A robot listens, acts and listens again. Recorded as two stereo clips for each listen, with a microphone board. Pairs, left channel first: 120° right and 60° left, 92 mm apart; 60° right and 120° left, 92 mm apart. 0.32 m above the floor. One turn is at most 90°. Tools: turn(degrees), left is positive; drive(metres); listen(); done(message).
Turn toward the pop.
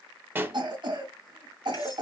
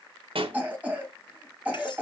turn(degrees=90)
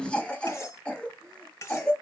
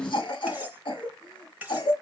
turn(degrees=35)
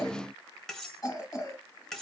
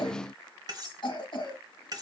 done("Facing where the pop came from. I can't hear it now.")